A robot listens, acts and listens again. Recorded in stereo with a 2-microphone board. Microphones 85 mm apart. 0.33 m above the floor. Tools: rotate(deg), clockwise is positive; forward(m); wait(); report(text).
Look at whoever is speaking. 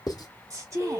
rotate(40)
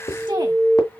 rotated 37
wait()
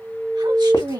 rotate(100)
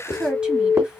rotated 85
rotate(10)
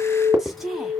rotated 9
report("Found it: a woman speaking, straight ahead, 2 to 4 m away.")